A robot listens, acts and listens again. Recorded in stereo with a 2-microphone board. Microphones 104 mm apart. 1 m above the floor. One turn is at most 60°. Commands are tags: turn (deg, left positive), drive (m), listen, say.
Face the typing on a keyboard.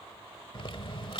<turn deg="55"/>
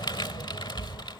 <turn deg="55"/>
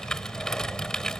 <say>Facing the typing on a keyboard.</say>